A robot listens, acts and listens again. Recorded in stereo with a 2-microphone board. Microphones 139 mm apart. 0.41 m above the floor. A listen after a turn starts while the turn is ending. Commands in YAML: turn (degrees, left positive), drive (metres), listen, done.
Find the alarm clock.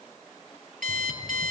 turn: -70
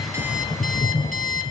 listen: true
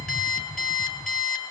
done: "Facing the alarm clock, over 4 m away."